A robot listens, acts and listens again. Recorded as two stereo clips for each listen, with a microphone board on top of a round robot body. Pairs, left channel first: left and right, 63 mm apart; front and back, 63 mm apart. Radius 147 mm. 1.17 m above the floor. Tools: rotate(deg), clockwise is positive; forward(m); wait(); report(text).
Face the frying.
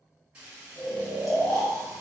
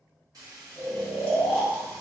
rotate(165)
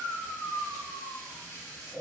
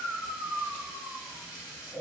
rotate(-15)
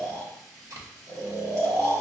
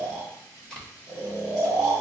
report("Facing the frying.")